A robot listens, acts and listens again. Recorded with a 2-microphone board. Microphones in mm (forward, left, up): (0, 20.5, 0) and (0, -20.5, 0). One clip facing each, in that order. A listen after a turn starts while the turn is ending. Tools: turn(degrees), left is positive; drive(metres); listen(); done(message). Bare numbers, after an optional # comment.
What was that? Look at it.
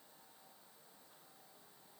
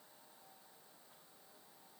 listen()
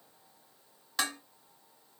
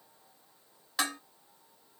turn(-30)
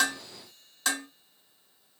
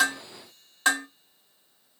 # So it is at 145° right.
turn(-145)
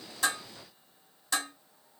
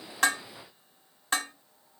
# The dishes clattering is now 40° right.
turn(-40)
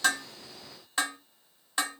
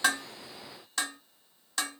# The dishes clattering is now 25° left.
turn(25)
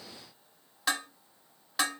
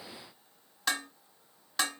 done("Found it: dishes clattering, straight ahead.")